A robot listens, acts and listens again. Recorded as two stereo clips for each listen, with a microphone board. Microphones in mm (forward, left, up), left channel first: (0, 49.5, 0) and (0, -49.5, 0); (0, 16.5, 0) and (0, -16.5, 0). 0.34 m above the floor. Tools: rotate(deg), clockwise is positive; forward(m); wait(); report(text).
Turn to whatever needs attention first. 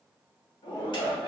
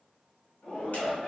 rotate(-55)
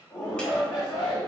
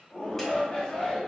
rotate(-55)
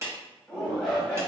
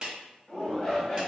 rotate(-10)
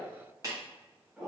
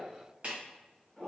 report("Facing the shout, 1 to 2 m away.")